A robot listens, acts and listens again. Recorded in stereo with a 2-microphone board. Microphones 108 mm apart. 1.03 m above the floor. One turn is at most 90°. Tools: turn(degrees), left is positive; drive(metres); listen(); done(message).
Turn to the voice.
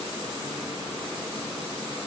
listen()
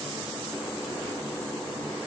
listen()
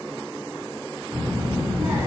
turn(degrees=-30)
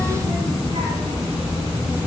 turn(degrees=-90)
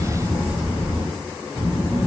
turn(degrees=-35)
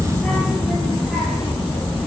done("Found it: a child speaking, straight ahead, 1 to 2 m away.")